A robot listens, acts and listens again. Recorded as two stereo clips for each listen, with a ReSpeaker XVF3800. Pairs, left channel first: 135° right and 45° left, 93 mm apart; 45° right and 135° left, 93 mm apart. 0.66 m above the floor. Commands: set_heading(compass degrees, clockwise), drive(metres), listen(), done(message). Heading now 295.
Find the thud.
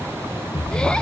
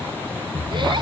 set_heading(95)
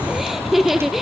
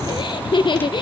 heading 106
set_heading(96)
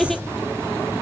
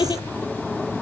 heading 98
done("I heard a thud from this way, but can't make it out now.")